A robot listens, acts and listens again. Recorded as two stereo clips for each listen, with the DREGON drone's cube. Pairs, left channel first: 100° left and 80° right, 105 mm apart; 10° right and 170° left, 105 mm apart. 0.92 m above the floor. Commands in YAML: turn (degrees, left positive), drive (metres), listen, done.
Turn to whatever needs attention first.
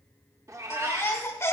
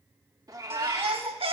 turn: 160
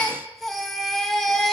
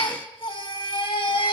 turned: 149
turn: 10
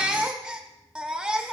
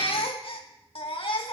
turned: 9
done: "Facing the baby crying, 1 to 2 m away."